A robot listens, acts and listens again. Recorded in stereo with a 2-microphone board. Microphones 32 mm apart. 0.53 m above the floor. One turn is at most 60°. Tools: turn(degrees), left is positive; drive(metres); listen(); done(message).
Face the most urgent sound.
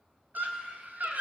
turn(degrees=-60)
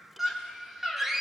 turn(degrees=-10)
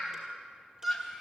done("Found it: a scream, straight ahead.")